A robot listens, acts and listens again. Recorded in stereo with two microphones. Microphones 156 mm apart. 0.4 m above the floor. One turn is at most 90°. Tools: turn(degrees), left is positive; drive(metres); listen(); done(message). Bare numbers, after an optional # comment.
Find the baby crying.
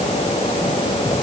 listen()
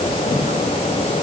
listen()
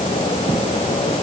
done("I can't make out a baby crying to turn to.")